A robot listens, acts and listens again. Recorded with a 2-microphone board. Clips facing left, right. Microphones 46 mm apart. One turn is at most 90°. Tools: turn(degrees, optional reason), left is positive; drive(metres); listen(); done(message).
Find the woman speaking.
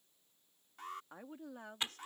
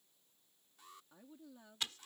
turn(degrees=60, reason="The woman speaking: about 60° left or 120° left.")
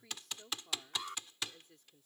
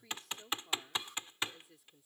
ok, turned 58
done("Facing the woman speaking.")